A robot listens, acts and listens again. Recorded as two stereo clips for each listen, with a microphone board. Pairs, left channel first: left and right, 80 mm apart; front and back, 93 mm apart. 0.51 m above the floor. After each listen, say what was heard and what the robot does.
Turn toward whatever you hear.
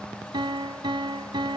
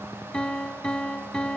The piano: 80° right. Turn 80° right.
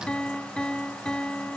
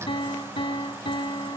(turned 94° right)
The piano is now 10° left. Turn 10° left.
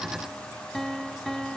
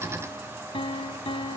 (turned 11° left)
Found it: a piano, straight ahead, under 1 m away.